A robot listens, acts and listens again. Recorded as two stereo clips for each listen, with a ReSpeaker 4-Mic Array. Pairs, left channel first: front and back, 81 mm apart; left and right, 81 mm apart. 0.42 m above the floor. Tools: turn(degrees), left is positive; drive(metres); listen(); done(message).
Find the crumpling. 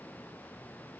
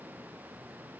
listen()
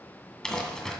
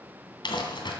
turn(degrees=80)
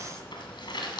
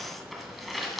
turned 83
done("Found it: crumpling, straight ahead, 2 to 4 m away.")